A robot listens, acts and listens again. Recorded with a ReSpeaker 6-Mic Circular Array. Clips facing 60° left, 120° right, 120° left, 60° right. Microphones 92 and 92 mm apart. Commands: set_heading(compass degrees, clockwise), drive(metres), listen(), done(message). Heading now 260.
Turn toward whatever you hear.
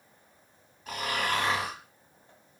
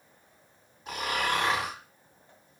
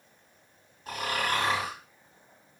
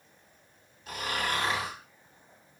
set_heading(90)
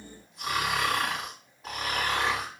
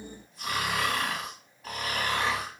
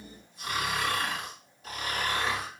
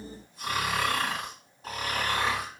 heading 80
set_heading(90)
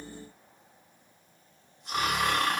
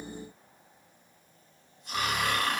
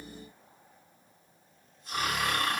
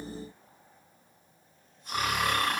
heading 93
done("Facing the snoring.")